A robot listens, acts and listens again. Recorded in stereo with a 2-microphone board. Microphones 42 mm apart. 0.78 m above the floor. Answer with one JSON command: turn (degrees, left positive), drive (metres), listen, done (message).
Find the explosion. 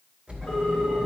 {"turn": -25}
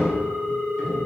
{"listen": true}
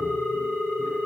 {"done": "I heard an explosion, but can't make it out now. It was about straight ahead or 130° right."}